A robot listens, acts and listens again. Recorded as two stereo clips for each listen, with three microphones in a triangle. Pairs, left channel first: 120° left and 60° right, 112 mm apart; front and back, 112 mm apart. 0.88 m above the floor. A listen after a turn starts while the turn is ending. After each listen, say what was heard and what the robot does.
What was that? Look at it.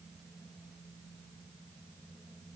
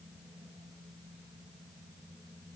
Keep listening.
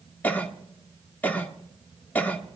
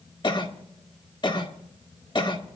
The cough: 45° left. Turn 45° left.
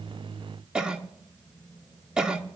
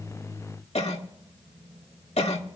The cough is now 25° left. Turn 25° left.
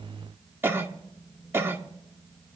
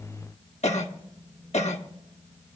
The cough is now 10° left. Turn 10° left.
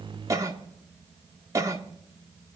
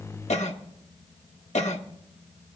Facing the cough, 1 to 2 m away.